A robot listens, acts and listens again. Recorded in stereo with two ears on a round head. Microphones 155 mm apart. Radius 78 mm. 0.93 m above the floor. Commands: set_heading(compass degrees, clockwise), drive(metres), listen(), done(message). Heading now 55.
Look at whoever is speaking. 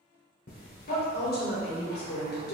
set_heading(350)
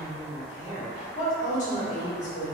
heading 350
set_heading(305)
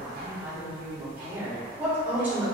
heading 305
set_heading(315)
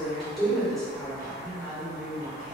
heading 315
done("Facing the woman speaking.")